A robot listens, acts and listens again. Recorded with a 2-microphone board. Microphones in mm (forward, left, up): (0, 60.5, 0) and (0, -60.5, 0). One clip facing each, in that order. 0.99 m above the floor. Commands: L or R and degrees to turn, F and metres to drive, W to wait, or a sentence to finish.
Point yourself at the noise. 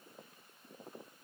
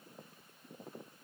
W
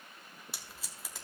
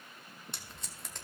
L30
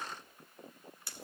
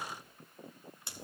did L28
R25
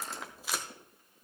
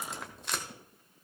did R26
Facing the tape being pulled, 1 to 2 m away.